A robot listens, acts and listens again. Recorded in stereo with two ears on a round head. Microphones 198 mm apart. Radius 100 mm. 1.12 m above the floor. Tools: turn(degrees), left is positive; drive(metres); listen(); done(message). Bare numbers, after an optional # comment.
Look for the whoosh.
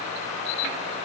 listen()
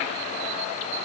listen()
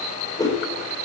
# The whoosh: about 20° left or 160° left.
turn(20)
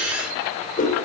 # So it is at 140° left.
turn(140)
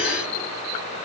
listen()
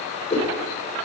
# The whoosh is now 30° left.
turn(30)
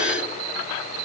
listen()
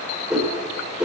done("Found it: a whoosh, straight ahead.")